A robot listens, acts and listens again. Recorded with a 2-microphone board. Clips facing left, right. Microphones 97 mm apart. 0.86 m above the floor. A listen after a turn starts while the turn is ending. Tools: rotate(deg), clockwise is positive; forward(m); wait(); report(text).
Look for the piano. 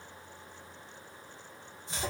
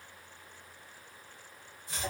wait()
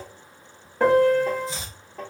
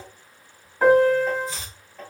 rotate(-90)
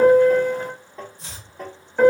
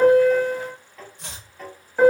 report("Facing the piano.")